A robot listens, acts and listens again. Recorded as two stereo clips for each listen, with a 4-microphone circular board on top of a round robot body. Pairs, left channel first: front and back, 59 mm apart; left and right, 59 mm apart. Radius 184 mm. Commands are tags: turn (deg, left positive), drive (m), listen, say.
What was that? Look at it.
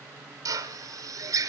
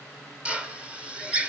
<turn deg="-160"/>
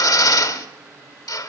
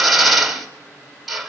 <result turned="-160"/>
<say>Found it: a drill, straight ahead.</say>